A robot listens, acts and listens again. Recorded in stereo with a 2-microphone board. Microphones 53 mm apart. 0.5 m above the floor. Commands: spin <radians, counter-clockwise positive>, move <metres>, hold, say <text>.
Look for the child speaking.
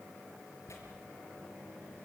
hold
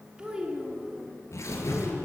spin -0.26
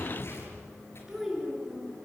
spin -0.52
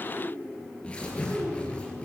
spin 0.44
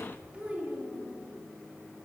spin -0.35
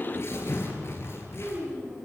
say Facing the child speaking, over 4 m away.